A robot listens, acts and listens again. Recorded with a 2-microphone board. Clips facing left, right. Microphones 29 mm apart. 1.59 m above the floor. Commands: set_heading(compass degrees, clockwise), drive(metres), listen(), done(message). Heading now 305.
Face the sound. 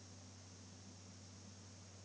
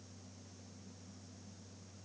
listen()
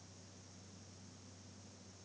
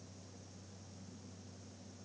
listen()
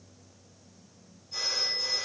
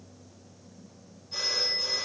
set_heading(335)
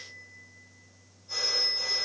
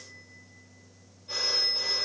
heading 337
set_heading(92)
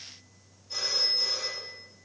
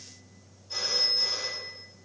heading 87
done("Facing the phone ringing.")